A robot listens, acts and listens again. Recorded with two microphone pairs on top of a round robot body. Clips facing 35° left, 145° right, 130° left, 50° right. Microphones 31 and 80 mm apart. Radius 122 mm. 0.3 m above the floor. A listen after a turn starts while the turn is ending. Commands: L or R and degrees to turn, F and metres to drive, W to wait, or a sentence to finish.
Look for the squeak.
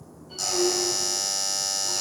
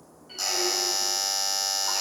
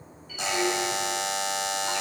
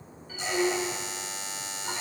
R110
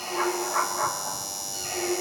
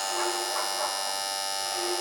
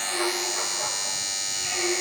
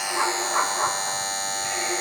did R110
L10
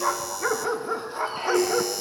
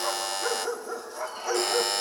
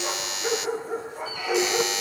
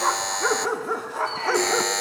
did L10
Facing the squeak, over 4 m away.